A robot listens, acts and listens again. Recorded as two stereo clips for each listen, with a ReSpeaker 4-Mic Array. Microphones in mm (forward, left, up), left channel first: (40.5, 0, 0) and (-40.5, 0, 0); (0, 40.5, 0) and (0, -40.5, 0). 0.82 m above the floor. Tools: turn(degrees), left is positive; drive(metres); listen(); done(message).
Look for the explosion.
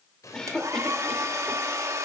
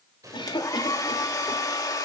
turn(degrees=-45)
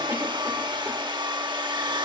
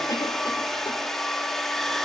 done("Facing where the explosion came from. I can't hear it now.")